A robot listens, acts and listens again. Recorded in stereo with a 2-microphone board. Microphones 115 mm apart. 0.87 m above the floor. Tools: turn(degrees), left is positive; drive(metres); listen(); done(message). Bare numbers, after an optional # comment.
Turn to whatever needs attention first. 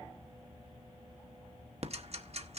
listen()
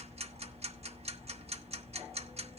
listen()
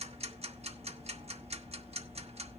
done("I can't make out anything urgent, only ticking.")